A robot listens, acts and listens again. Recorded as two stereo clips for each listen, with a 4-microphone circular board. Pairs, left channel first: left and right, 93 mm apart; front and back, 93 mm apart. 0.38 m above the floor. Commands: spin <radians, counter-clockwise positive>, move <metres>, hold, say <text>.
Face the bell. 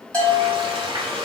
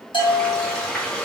spin 0.26
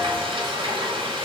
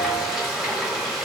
hold
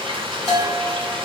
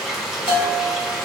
say Found it: a bell, straight ahead, 1 to 2 m away.